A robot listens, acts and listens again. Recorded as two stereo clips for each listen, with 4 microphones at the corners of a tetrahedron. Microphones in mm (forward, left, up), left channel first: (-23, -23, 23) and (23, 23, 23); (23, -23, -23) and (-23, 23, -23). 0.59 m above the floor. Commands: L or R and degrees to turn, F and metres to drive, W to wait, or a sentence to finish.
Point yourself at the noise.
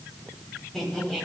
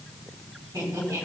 L140
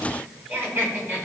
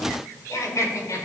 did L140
R10
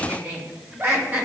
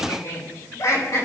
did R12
Found it: laughter, straight ahead, over 4 m away.